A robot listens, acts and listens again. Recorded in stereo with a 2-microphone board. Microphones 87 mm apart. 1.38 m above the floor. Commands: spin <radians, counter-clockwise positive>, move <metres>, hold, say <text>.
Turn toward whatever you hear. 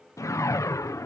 spin 0.70
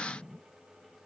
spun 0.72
say Facing the whoosh.